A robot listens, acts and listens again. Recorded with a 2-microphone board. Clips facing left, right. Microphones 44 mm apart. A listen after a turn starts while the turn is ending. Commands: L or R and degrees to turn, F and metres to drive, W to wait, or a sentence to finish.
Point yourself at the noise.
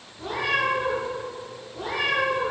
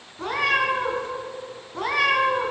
R90
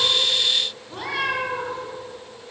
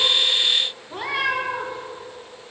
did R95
R20
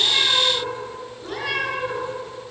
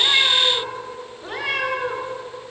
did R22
R20
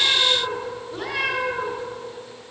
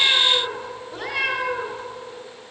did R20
Facing the cat meowing, 2 to 4 m away.